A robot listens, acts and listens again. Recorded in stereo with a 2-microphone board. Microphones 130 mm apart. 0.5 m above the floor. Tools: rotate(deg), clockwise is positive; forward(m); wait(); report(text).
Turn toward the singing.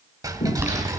rotate(-65)
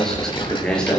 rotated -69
report("Found it: singing, straight ahead.")